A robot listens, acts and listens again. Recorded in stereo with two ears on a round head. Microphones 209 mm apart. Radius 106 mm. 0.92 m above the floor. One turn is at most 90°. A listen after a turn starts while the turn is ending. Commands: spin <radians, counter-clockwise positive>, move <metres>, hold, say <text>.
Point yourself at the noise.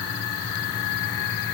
hold
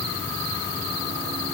hold
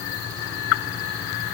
say I can't make out anything.